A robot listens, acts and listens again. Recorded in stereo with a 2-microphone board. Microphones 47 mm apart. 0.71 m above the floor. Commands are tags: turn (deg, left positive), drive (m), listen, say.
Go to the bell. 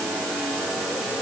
<listen/>
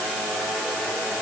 <listen/>
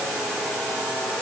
<say>I can't make out a bell.</say>